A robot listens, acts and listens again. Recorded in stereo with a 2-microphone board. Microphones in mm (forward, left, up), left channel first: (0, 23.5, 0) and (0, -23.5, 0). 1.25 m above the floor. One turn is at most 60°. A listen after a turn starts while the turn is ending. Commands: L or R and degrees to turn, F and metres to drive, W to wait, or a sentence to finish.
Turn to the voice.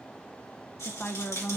L40
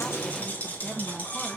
Facing the woman speaking, under 1 m away.